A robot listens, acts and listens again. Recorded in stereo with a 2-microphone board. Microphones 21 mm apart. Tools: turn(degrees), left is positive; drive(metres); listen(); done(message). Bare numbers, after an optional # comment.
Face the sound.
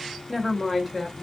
turn(-30)
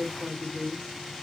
turn(-30)
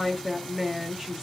# The woman speaking: about 20° right or 160° right.
turn(-20)
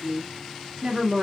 # The woman speaking: about 25° right or 155° right.
turn(-25)
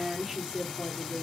turn(-30)
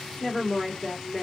# So it is at 20° left.
turn(20)
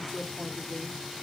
done("Facing the woman speaking.")